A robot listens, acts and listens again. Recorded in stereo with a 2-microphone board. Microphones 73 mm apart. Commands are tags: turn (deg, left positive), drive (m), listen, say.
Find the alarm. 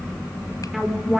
<turn deg="-30"/>
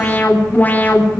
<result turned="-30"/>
<turn deg="25"/>
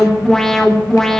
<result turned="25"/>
<say>Found it: an alarm, straight ahead.</say>